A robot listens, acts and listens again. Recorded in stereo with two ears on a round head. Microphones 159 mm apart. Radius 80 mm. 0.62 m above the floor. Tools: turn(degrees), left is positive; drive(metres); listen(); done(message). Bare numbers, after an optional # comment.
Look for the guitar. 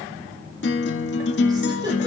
# The guitar: about 65° left or 115° left.
turn(65)
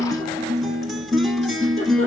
done("Facing the guitar.")